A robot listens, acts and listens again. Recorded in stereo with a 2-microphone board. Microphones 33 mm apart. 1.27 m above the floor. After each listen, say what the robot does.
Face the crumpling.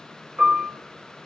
Keep listening.
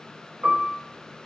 Keep listening.
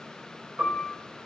I can't make out crumpling to turn to.